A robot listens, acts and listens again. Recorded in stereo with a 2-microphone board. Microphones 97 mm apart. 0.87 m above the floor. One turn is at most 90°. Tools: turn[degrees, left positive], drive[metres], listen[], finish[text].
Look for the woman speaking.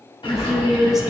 Action: turn[-30]
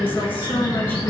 Action: listen[]
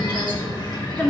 Thought: So it is at 20° left.
Action: turn[20]
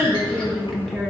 Action: finish[Found it: a woman speaking, straight ahead, 1 to 2 m away.]